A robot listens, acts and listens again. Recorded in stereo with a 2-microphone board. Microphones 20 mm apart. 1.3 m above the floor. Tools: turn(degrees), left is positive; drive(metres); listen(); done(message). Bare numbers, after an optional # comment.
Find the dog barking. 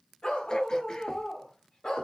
# The dog barking: about 45° left or 135° left.
turn(45)
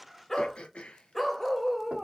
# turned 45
done("Found it: a dog barking, straight ahead.")